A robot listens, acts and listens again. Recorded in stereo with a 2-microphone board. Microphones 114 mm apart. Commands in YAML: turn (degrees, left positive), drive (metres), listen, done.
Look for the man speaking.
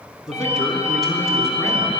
turn: 30
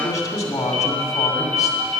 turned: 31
turn: 145
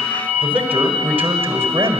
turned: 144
turn: -20
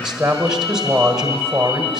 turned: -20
done: "Found it: a man speaking, straight ahead."